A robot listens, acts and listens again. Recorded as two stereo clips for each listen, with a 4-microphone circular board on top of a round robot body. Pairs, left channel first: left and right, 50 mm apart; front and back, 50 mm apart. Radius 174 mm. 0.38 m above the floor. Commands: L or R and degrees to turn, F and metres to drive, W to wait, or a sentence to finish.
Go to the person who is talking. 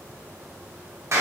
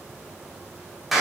W
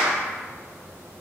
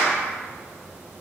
W
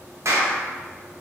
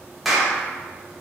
I can't make out anyone speaking to turn to.